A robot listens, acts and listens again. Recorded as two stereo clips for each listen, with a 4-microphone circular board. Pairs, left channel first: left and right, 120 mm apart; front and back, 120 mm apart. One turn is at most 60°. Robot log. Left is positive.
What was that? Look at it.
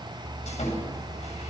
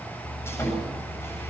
note: The sawing: 70° left.
cmd yaw +60
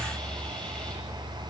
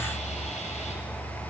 note: Nothing new. It was at 10° left.
cmd yaw +10
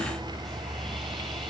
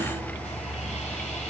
cmd idle
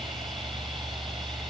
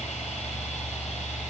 end: Facing where the sawing came from. I can't hear it now.